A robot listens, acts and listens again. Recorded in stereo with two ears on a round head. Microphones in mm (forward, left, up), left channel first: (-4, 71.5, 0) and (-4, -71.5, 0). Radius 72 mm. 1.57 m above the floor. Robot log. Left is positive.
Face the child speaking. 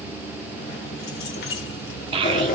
note: The child speaking: about 35° right or 145° right.
cmd yaw -35
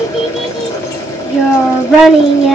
end: Found it: a child speaking, straight ahead, under 1 m away.